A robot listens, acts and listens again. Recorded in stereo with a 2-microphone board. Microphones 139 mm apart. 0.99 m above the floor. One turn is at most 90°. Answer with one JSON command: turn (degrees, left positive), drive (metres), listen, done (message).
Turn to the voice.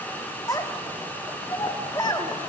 {"turn": 30}
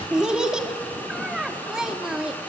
{"done": "Facing the child speaking, 1 to 2 m away."}